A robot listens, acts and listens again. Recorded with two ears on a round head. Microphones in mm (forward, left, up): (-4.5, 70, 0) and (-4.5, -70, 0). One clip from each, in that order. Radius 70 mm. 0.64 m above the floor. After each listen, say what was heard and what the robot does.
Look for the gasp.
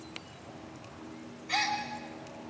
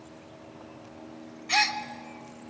The gasp: about 50° right or 130° right. Turn 50° right.
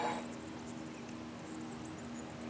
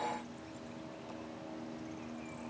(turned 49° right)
Keep listening.
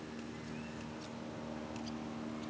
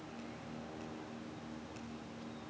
I heard a gasp, but can't make it out now. It was about straight ahead or 80° right.